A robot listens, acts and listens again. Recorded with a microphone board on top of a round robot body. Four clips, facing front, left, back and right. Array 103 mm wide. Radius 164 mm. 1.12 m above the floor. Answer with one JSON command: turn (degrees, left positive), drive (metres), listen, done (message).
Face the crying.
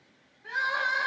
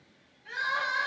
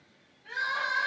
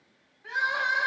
{"turn": -60}
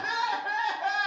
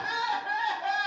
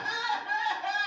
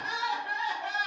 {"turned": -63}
{"done": "Found it: crying, straight ahead."}